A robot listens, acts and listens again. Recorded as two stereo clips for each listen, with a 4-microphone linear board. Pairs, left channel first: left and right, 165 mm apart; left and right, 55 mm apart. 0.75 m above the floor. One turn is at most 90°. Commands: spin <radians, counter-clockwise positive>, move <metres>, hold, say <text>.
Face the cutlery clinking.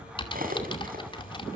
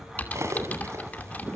spin -0.96
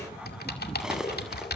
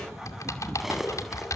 say Found it: cutlery clinking, straight ahead, 2 to 4 m away.